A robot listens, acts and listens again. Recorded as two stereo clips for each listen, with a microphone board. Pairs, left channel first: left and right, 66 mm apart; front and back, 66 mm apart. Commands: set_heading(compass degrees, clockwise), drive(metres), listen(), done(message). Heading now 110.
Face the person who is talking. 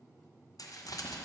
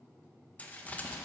listen()
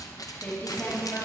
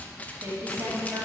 set_heading(320)
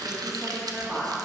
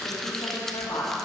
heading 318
done("Facing the woman speaking, 2 to 4 m away.")